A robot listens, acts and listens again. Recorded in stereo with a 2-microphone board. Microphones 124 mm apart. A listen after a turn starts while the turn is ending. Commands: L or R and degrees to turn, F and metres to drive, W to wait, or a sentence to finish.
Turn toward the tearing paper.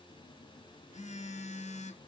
W
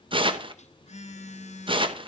R45
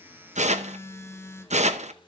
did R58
R75
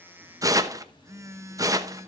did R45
R30
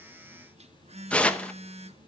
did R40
L10
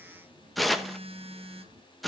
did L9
Found it: tearing paper, straight ahead, under 1 m away.